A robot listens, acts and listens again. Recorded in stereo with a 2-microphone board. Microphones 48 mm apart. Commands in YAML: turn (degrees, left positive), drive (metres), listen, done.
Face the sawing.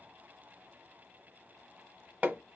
listen: true
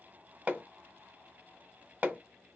listen: true
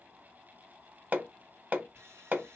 turn: -65
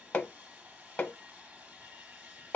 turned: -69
turn: -30
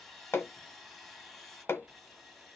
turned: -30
done: "Found it: sawing, straight ahead, 2 to 4 m away."